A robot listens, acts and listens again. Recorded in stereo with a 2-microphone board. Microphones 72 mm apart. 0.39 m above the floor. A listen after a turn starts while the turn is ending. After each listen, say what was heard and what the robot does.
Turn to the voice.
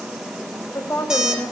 The woman speaking: about 50° left or 130° left. Turn 50° left.
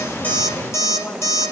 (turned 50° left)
Keep listening.
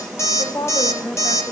So it is at 60° left. Turn 60° left.
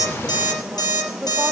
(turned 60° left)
Keep listening.
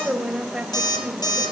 Found it: a woman speaking, straight ahead, 2 to 4 m away.